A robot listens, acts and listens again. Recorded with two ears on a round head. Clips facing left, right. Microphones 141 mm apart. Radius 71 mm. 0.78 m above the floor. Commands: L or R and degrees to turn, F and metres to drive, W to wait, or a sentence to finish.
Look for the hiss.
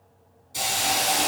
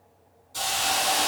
L20
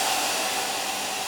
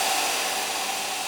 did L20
Found it: a hiss, straight ahead.